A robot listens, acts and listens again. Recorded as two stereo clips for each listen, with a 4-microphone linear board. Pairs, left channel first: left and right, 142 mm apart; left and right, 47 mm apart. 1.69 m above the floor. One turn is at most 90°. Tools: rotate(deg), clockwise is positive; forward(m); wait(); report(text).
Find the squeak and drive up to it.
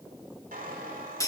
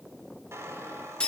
rotate(90)
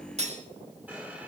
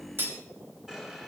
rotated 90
rotate(10)
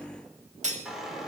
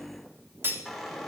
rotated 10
forward(1.0)
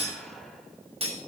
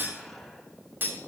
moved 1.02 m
wait()
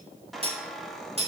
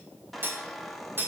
forward(1.0)
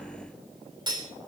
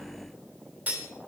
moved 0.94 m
wait()
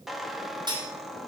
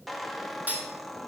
forward(1.0)
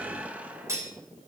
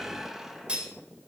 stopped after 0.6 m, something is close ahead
rotate(15)
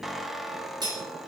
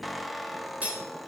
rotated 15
report("Arrived at the squeak, straight ahead.")